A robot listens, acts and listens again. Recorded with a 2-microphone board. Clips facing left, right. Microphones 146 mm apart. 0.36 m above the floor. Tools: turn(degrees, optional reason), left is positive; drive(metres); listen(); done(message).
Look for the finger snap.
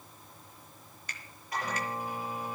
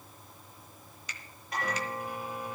turn(degrees=50, reason="The finger snap: about 50° left or 130° left.")
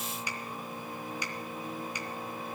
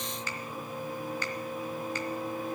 turn(degrees=15, reason="So it is at 15° left.")
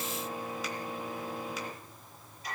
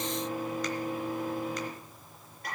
listen()
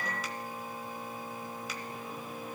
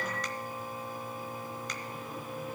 listen()
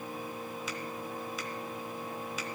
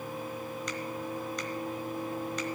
done("Facing where the finger snap came from. I can't hear it now.")